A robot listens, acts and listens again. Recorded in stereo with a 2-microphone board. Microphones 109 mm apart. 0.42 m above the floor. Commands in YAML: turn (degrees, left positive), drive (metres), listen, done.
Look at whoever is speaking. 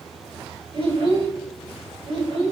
turn: -60
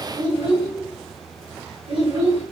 turn: -55
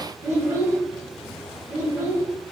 turn: -20
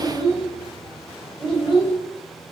done: "Found it: a child speaking, straight ahead."